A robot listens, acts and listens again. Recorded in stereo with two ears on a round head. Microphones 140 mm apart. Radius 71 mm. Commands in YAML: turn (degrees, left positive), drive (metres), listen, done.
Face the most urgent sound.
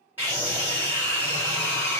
turn: -30
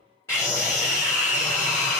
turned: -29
turn: 15
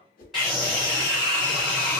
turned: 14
done: "Facing the scream."